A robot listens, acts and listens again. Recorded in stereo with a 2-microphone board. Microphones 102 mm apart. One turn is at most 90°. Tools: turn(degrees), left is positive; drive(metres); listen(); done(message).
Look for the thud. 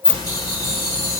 listen()
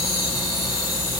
listen()
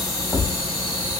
turn(degrees=30)
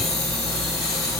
listen()
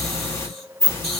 done("I heard a thud, but can't make it out now. It was about 30° right or 150° left.")